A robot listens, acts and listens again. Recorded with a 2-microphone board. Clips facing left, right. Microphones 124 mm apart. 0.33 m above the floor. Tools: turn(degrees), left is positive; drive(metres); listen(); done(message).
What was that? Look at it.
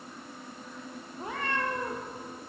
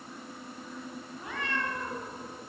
turn(degrees=40)
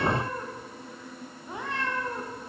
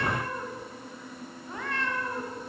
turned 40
turn(degrees=20)
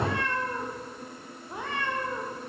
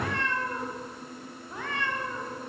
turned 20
turn(degrees=25)
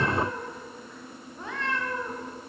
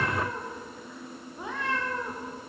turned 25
turn(degrees=-15)
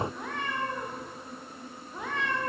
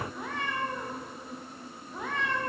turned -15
done("Found it: a cat meowing, straight ahead.")